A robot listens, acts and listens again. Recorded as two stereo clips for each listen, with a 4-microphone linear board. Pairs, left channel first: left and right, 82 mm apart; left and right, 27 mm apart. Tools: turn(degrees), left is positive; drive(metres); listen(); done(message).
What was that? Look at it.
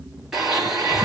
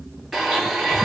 turn(degrees=-30)
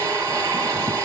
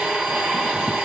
turn(degrees=-145)
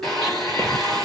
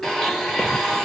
done("Found it: a blender, straight ahead, 1 to 2 m away.")